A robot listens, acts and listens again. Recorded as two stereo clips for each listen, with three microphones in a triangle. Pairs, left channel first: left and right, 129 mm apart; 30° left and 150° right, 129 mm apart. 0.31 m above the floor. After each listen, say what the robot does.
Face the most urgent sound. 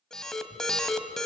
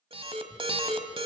Turn 175° left.
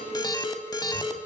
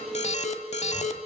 Turn 35° left.
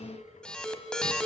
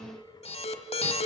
Found it: an alarm, straight ahead, 1 to 2 m away.